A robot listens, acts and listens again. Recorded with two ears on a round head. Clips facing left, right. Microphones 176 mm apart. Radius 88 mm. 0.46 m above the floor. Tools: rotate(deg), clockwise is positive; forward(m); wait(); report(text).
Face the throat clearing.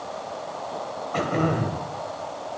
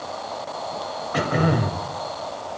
rotate(30)
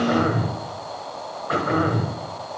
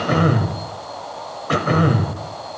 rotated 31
rotate(140)
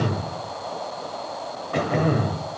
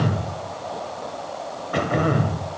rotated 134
report("Facing the throat clearing, under 1 m away.")